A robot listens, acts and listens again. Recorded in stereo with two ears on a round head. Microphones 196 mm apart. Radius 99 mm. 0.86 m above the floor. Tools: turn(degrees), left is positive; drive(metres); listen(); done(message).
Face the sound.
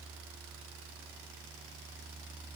listen()
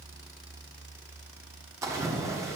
turn(degrees=-30)
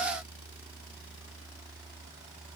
listen()
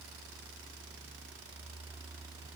done("I heard a splash, but can't make it out now. It was about 15° left or 135° right.")